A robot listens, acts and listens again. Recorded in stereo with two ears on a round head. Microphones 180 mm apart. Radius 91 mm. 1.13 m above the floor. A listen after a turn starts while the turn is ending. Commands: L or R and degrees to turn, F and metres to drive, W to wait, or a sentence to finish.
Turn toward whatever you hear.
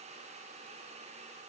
W
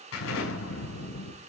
L70
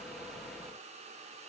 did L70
W
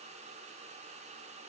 I heard an explosion, but can't make it out now. It was about straight ahead or 40° left.